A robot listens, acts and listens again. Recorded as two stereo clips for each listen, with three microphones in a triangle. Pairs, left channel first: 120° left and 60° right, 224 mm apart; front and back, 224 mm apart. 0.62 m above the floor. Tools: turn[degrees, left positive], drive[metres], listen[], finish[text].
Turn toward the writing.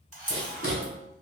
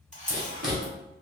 Thought: The writing: 90° right.
Action: turn[-90]
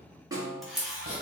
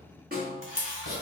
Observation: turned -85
Action: finish[Facing the writing.]